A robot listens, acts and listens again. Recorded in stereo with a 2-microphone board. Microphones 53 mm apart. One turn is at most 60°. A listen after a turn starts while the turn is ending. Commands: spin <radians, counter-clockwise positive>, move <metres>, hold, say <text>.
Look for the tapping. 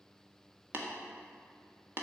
spin -0.79
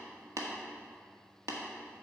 spin -1.05
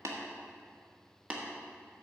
spin -0.44
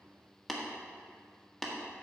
say Facing the tapping, 1 to 2 m away.